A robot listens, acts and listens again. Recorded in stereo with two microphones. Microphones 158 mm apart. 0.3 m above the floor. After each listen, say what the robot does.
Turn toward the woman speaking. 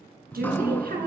Turn 70° right.
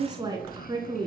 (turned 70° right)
Turn 25° right.
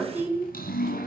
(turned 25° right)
Turn 10° right.
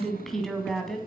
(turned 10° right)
Found it: a woman speaking, straight ahead, 2 to 4 m away.